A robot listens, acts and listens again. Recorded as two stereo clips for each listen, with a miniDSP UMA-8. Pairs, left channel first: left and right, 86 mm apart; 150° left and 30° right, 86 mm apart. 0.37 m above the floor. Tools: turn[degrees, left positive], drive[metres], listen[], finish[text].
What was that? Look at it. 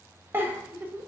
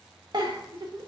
Thought: The giggle: 30° right.
Action: turn[-30]
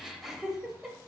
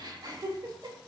Action: finish[Found it: a giggle, straight ahead.]